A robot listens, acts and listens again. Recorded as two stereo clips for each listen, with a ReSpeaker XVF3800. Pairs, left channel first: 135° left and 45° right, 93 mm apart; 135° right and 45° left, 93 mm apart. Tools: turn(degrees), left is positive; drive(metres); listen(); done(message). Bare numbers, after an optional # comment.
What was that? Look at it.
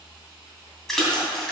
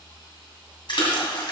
# The splash: 140° right.
turn(-140)
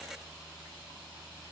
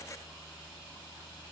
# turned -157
# Nothing new. It was at 15° left.
turn(15)
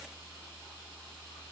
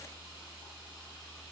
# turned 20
done("Facing where the splash came from. I can't hear it now.")